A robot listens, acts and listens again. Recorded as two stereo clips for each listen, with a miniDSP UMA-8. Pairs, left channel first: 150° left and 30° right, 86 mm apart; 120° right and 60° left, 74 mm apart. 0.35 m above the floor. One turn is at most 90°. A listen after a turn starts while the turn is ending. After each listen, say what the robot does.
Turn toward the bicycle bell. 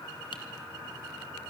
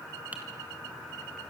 Keep listening.
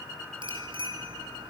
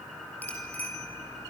Turn 50° right.
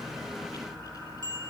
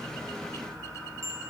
Turn 10° left.
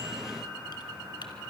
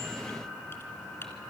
Keep listening.
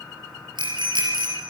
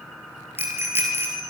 Facing the bicycle bell, over 4 m away.